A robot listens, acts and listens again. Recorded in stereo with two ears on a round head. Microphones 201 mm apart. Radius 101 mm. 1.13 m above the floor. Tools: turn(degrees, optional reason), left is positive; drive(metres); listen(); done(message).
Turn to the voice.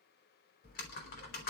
listen()
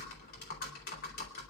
listen()
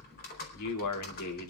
turn(degrees=90)
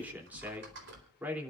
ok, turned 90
done("Facing the man speaking.")